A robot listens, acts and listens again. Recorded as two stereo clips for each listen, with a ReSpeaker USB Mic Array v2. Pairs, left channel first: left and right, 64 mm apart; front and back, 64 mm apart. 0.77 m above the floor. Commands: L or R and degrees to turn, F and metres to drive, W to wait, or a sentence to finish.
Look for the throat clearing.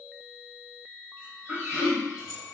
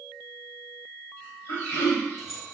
R15
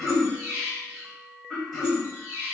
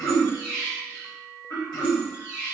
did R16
Found it: throat clearing, straight ahead, 1 to 2 m away.